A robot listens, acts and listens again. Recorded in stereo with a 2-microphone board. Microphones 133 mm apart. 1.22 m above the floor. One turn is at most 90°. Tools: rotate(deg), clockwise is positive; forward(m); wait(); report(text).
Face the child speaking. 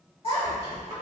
rotate(-45)
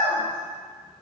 rotate(-10)
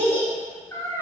rotate(-25)
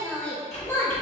rotate(-20)
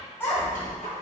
rotate(-20)
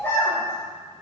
rotate(-20)
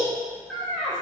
report("Facing the child speaking.")